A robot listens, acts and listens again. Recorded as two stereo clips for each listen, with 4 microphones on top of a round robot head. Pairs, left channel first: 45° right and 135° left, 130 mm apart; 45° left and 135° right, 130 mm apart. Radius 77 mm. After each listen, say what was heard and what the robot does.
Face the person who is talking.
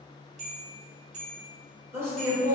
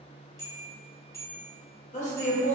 The woman speaking: 65° left. Turn 65° left.
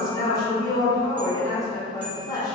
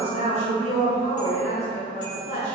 The woman speaking is now 15° left. Turn 15° left.
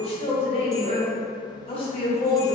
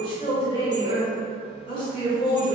Found it: a woman speaking, straight ahead.